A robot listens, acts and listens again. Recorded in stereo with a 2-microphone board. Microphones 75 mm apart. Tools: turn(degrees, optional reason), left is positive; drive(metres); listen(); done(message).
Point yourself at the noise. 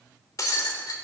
turn(degrees=50, reason="The breaking glass: about 50° left or 130° left.")
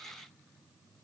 listen()
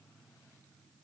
done("I heard breaking glass, but can't make it out now. It was about straight ahead or 80° left.")